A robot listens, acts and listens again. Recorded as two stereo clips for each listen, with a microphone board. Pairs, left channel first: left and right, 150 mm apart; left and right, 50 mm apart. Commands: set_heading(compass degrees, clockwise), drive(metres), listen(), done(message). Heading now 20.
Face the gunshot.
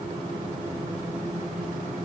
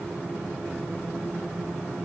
listen()
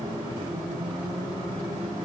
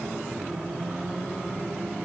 listen()
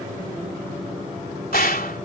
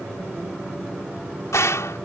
set_heading(290)
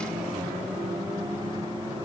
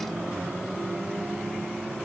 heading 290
done("Facing where the gunshot came from. I can't hear it now.")